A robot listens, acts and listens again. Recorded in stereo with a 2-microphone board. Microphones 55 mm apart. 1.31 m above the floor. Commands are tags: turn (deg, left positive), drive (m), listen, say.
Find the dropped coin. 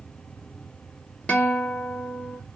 <listen/>
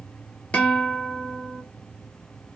<listen/>
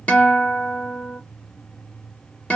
<say>I can't make out a dropped coin, only a guitar.</say>